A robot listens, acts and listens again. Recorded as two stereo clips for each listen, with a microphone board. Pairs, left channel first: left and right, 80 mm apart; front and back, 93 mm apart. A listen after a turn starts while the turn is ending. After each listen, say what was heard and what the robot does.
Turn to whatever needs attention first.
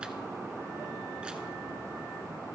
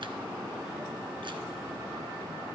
Keep listening.
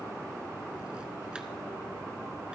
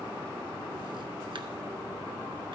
Keep listening.
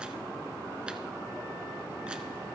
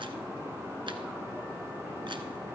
I can't make out anything urgent to turn to.